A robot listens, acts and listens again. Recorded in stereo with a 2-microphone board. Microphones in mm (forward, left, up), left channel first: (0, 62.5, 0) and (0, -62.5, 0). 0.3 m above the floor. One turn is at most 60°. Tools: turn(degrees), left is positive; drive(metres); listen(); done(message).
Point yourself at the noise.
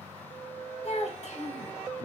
turn(degrees=55)
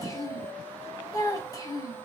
turn(degrees=35)
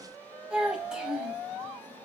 turn(degrees=-10)
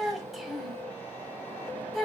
done("Found it: a child speaking, straight ahead, under 1 m away.")